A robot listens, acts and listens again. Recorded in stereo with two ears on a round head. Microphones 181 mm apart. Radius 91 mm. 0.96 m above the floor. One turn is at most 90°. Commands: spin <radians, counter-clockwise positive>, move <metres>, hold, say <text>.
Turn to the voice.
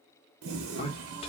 spin 0.52
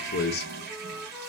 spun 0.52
spin 1.57
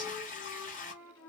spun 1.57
spin 0.52
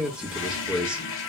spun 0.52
say Facing the man speaking.